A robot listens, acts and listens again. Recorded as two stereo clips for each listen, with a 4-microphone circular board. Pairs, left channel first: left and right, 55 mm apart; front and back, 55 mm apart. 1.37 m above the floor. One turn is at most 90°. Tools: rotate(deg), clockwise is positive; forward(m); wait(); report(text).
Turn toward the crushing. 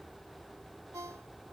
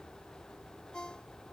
wait()
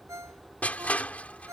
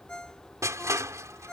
rotate(-90)
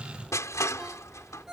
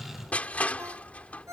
rotate(-65)
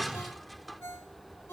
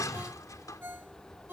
report("Facing the crushing.")